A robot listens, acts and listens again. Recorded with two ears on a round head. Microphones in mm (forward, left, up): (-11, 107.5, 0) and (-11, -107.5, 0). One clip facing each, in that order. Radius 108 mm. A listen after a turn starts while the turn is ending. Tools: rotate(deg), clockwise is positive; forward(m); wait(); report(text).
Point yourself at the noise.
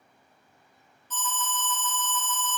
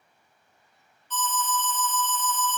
rotate(-35)
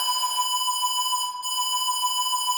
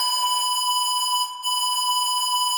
rotate(-10)
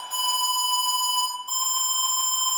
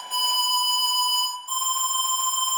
report("Facing the alarm, 1 to 2 m away.")